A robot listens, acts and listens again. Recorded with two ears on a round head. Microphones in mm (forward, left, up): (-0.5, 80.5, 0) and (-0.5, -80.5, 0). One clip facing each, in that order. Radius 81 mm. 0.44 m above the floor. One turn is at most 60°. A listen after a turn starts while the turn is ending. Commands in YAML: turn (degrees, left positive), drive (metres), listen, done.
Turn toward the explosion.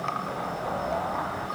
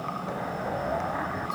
turn: -30
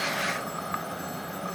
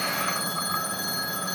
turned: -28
listen: true
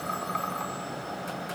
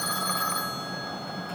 done: "I heard an explosion, but can't make it out now. It was about 20° left or 145° right."